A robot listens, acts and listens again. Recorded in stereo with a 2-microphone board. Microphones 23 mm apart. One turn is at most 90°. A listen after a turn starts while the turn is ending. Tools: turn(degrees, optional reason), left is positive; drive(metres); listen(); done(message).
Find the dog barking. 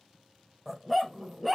turn(degrees=-30)
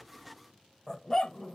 turn(degrees=20, reason="So it is at 20° left.")
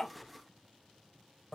listen()
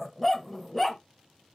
done("Facing the dog barking.")